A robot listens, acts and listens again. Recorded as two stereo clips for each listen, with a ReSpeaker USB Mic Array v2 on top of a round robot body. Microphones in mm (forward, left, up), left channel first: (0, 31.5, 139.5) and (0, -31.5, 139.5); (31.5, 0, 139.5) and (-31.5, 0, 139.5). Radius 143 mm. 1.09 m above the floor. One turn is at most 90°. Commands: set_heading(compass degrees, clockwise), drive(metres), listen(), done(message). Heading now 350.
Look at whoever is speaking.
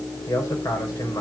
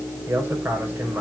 set_heading(260)
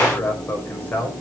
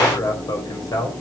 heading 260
set_heading(230)
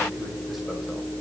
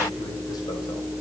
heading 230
listen()
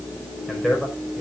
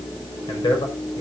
done("Facing the man speaking.")